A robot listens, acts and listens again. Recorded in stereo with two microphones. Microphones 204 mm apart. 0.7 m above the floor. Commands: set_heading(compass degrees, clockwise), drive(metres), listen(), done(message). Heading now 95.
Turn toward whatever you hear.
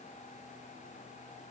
listen()
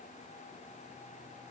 listen()
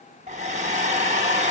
set_heading(130)
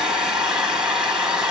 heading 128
done("Found it: a hair dryer, straight ahead.")